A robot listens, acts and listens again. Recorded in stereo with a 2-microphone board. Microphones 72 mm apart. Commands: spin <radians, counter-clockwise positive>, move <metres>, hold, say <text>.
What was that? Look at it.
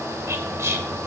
spin -0.70
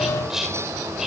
say Facing the whispering, 1 to 2 m away.